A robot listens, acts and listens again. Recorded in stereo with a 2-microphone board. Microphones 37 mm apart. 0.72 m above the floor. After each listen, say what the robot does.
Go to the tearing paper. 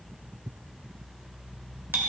Keep listening.
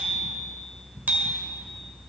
Keep listening.
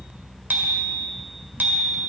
I can't make out tearing paper to turn to.